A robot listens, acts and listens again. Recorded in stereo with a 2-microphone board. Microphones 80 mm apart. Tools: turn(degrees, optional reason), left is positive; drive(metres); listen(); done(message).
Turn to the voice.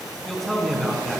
turn(degrees=30)
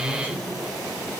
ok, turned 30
turn(degrees=150, reason="So it is at 150° left.")
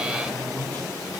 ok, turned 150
turn(degrees=25, reason="The man speaking is now 25° left.")
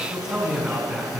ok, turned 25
turn(degrees=-10, reason="The man speaking is now 10° right.")
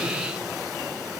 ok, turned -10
listen()
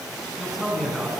done("Facing the man speaking.")